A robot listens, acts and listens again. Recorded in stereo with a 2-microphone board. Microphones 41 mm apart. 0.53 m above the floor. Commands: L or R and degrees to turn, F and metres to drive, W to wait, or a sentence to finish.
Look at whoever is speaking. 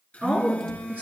R35
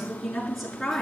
Found it: a woman speaking, straight ahead.